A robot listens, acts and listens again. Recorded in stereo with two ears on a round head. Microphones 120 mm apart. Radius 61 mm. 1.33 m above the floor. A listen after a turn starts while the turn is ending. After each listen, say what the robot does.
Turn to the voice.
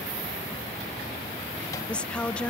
Turn 30° left.
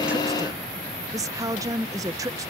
Turn 25° right.
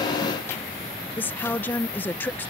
Turn 15° left.
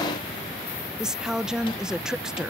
Found it: a woman speaking, straight ahead.